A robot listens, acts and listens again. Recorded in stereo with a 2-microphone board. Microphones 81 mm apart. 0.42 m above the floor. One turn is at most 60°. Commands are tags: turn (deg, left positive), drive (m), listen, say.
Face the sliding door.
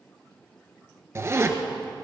<listen/>
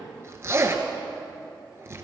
<listen/>
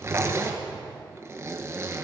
<say>I can't make out a sliding door, only a zipper.</say>